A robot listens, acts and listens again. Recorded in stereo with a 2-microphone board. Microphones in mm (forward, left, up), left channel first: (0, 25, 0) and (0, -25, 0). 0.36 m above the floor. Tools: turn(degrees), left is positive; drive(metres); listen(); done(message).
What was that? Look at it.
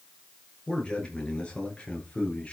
turn(degrees=25)
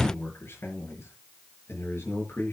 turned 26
turn(degrees=125)
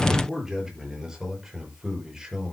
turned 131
turn(degrees=-10)
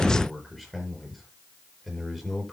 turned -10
done("Facing the man speaking, over 4 m away.")